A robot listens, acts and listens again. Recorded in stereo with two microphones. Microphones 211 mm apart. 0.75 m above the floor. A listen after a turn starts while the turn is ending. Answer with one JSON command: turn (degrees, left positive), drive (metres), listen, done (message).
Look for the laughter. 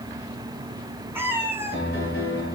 {"listen": true}
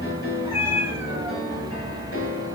{"listen": true}
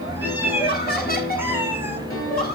{"turn": 45}
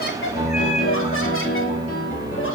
{"listen": true}
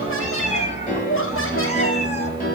{"turn": 80}
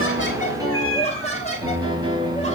{"turn": 30}
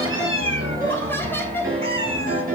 {"turn": 10}
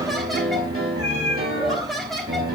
{"done": "Found it: laughter, straight ahead, 2 to 4 m away."}